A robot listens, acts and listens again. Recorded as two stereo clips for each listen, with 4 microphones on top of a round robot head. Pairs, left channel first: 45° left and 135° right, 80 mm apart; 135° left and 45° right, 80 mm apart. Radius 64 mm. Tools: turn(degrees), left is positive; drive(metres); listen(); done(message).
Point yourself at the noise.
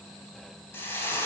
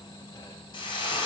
turn(degrees=105)
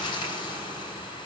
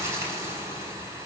done("Found it: frying, straight ahead.")